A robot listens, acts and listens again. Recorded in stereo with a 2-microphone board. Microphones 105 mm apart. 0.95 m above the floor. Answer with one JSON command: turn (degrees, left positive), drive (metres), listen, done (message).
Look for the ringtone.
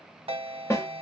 {"turn": -70}
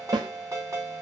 {"turn": -30}
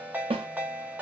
{"turn": -15}
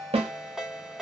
{"done": "Found it: a ringtone, straight ahead, 1 to 2 m away."}